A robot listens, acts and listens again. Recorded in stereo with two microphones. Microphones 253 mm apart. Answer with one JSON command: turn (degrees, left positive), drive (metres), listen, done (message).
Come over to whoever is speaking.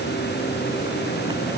{"listen": true}
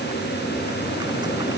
{"listen": true}
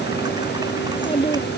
{"turn": 20}
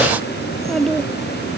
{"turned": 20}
{"drive": 1.0}
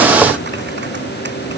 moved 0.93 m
{"listen": true}
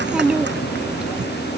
{"drive": 1.0}
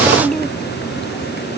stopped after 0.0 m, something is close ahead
{"done": "Something is in my way. I am facing the child speaking but have not reached it."}